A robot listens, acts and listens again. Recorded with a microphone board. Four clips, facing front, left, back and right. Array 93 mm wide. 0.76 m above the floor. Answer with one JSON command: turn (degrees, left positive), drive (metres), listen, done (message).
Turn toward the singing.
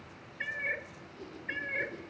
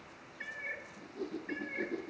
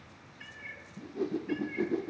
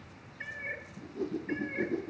{"listen": true}
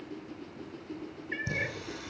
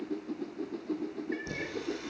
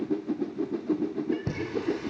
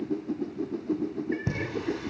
{"turn": -130}
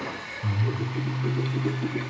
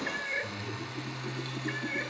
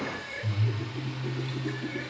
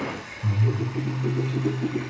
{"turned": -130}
{"turn": -25}
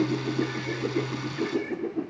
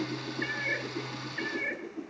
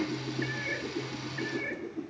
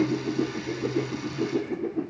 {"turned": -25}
{"turn": -10}
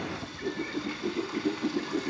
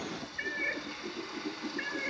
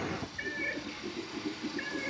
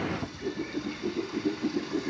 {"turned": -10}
{"done": "Facing the singing."}